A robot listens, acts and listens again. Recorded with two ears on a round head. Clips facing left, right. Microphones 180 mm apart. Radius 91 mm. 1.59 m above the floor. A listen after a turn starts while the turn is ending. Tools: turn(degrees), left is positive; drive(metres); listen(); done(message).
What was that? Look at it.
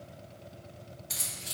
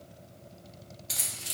turn(degrees=-90)
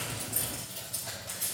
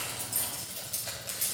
turn(degrees=-25)
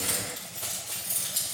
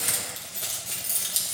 turn(degrees=-35)
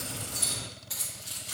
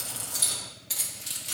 turn(degrees=-30)
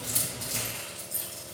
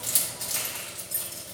done("Facing the keys jangling.")